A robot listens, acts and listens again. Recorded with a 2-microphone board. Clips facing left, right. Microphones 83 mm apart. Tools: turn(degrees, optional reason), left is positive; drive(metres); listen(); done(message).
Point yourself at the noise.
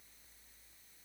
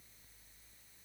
listen()
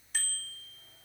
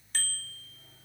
turn(degrees=30)
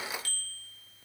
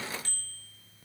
turn(degrees=-25, reason="So it is at 25° right.")
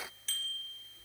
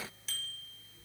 done("Facing the bicycle bell.")